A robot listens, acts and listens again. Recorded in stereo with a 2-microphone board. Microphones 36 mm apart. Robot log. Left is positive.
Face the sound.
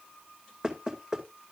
note: The knocking: about 20° right or 160° right.
cmd yaw -20
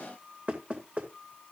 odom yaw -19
note: So it is at 140° right.
cmd yaw -140
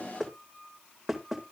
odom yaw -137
end: Found it: knocking, straight ahead.